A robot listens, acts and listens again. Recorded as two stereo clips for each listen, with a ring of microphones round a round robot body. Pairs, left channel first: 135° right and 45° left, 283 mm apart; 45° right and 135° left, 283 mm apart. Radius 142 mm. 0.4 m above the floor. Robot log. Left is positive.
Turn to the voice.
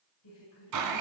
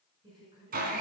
note: The woman speaking: 150° right.
cmd yaw -150
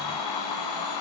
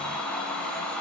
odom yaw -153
cmd idle
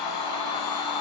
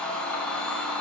cmd idle
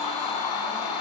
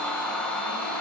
end: I heard a woman speaking from this way, but can't make it out now.